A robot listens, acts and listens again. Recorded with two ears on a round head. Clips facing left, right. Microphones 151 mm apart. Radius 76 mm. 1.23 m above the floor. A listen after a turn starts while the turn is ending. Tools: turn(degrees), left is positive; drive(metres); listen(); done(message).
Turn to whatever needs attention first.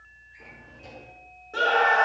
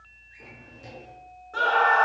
turn(degrees=25)
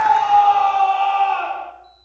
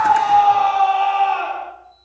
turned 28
done("Facing the scream, 2 to 4 m away.")